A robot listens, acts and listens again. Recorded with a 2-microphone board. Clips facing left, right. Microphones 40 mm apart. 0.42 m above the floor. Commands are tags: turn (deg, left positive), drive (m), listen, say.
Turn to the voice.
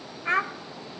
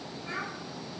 <turn deg="65"/>
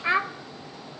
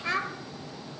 <turn deg="30"/>
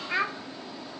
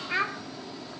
<say>Facing the child speaking.</say>